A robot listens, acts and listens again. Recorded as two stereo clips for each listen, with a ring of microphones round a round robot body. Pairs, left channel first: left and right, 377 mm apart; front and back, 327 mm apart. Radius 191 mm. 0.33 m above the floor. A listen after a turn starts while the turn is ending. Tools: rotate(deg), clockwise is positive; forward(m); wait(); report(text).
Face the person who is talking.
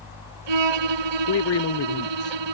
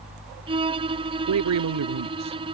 rotate(-140)
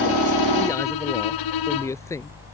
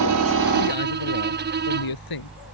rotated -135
report("Facing the man speaking.")